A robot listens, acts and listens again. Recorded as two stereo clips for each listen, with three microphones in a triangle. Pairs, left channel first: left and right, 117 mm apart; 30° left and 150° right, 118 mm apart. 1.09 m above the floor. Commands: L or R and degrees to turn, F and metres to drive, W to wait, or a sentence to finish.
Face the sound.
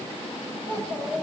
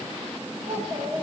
R125
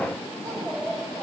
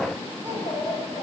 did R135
Facing the child speaking, over 4 m away.